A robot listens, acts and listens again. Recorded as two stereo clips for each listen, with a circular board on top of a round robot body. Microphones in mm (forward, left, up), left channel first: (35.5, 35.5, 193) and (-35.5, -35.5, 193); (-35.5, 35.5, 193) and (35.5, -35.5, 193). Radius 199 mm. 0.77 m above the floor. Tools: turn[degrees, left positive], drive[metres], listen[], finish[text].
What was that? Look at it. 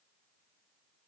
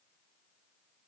Action: listen[]
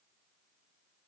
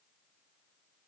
Action: listen[]
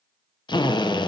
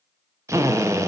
Thought: The drill: 10° left.
Action: turn[10]
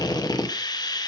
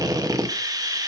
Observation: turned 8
Action: finish[Facing the drill.]